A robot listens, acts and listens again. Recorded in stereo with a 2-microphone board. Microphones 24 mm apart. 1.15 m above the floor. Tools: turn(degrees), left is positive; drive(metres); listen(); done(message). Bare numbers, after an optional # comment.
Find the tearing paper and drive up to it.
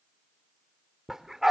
listen()
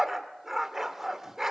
listen()
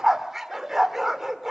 done("I can't make out tearing paper to turn to.")